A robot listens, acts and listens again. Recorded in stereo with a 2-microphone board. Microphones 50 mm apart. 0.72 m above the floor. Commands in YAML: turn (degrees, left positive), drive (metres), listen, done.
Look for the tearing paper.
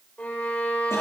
listen: true
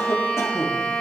listen: true
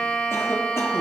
done: "I can't make out tearing paper to turn to."